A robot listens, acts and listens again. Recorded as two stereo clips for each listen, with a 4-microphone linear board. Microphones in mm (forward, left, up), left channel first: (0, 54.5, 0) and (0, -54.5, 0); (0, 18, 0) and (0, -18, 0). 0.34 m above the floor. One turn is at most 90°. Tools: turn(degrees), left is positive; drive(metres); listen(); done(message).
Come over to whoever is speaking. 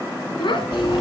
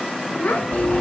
turn(degrees=45)
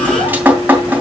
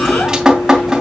listen()
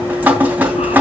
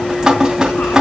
listen()
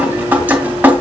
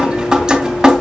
done("I heard a child speaking, but can't make it out now. It was about straight ahead or 90° left. I did not reach it.")